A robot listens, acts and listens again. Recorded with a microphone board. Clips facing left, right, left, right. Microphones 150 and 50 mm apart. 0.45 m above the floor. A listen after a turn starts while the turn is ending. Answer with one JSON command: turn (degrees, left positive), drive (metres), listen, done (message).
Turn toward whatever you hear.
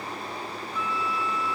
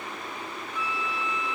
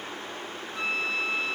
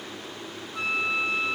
{"turn": -30}
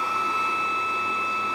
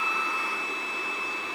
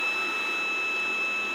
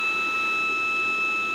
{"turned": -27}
{"turn": -135}
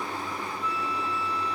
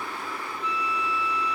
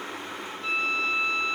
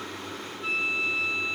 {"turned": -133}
{"done": "Facing the flute, 1 to 2 m away."}